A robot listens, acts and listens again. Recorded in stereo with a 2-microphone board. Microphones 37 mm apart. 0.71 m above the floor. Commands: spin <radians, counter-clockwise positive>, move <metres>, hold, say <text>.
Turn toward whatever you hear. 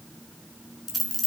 spin 0.52
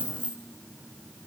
spin -0.44
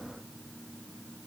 say I heard a dropped coin from this way, but can't make it out now.